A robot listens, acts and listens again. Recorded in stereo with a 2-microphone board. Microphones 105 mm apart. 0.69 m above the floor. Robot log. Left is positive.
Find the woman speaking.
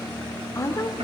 note: The woman speaking: about 30° left or 150° left.
cmd yaw +30
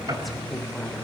cmd idle
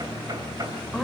end: Facing the woman speaking, 2 to 4 m away.